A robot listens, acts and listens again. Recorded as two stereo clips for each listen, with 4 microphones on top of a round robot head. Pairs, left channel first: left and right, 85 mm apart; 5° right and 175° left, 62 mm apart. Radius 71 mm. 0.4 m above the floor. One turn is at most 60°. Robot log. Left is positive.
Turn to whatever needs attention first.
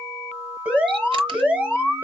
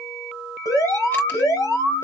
note: The alarm: 10° right.
cmd yaw -10
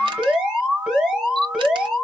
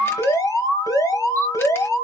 end: Found it: an alarm, straight ahead, 2 to 4 m away.